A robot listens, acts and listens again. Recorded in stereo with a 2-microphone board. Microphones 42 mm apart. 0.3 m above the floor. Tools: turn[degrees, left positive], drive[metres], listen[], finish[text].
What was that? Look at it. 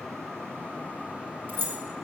Thought: The keys jangling: about 55° right or 125° right.
Action: turn[-55]
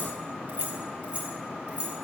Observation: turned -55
Thought: So it is at 30° right.
Action: turn[-30]
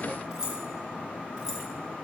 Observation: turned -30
Thought: The keys jangling is now 15° right.
Action: turn[-15]
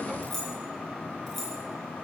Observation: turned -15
Action: finish[Facing the keys jangling, 2 to 4 m away.]